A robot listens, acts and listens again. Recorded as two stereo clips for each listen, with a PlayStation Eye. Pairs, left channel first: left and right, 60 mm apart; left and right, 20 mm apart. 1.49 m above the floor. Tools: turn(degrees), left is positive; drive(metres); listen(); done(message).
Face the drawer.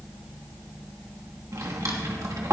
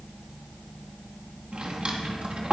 turn(degrees=-65)
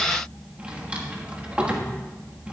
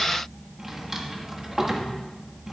turn(degrees=-25)
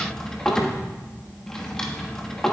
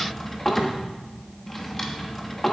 turn(degrees=10)
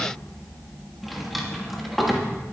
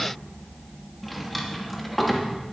done("Facing the drawer.")